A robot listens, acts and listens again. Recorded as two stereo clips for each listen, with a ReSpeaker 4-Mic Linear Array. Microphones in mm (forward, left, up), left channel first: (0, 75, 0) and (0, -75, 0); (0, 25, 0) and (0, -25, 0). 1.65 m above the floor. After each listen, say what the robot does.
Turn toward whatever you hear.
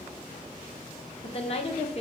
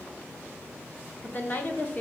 Turn 45° left.
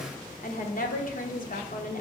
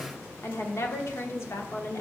Turn 85° left.
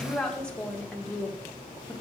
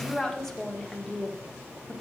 Facing the woman speaking.